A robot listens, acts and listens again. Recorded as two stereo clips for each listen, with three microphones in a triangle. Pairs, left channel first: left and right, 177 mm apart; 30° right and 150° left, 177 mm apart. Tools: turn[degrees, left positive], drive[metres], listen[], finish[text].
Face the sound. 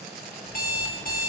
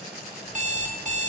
Thought: The alarm clock: 110° left.
Action: turn[110]
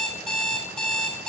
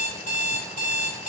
Action: finish[Facing the alarm clock.]